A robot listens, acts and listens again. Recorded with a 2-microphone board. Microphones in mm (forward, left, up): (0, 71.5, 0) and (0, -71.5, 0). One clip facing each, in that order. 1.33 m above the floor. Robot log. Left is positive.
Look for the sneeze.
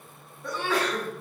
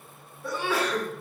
cmd yaw -30
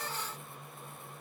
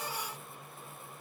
cmd idle
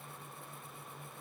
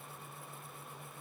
end: I heard a sneeze, but can't make it out now. It was about 25° left or 145° right.